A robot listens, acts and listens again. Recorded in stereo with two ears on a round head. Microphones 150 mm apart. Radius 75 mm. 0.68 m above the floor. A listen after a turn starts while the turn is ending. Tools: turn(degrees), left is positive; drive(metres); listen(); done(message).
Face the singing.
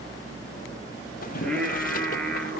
turn(degrees=30)
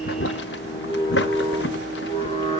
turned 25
turn(degrees=145)
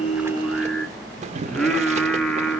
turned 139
done("Found it: singing, straight ahead, 2 to 4 m away.")